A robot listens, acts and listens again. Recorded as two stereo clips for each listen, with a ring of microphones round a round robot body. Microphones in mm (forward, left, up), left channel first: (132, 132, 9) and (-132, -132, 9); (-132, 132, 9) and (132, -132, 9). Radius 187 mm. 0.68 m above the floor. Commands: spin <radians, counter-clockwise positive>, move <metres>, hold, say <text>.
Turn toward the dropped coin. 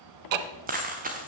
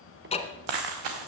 spin -1.13
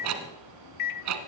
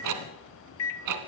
say I heard a dropped coin from this way, but can't make it out now.